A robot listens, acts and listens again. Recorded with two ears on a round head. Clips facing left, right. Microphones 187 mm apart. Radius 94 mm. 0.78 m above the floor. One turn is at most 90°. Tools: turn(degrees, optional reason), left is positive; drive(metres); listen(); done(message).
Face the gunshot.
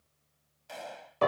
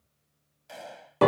turn(degrees=30)
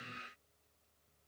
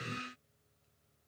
listen()
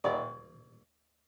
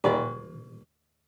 done("I heard a gunshot, but can't make it out now. It was about 30° right or 150° left.")